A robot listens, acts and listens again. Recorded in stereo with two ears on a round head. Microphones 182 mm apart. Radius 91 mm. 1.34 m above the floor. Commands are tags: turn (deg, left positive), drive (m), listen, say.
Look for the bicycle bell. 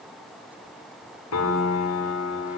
<listen/>
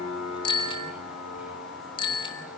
<turn deg="25"/>
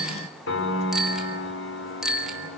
<say>Facing the bicycle bell.</say>